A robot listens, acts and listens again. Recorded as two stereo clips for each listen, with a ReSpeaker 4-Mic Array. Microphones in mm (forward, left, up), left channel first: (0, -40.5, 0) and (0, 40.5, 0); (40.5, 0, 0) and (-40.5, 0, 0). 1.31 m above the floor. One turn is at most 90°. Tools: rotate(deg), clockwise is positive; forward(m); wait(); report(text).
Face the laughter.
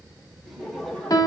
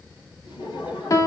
report("Facing the laughter, over 4 m away.")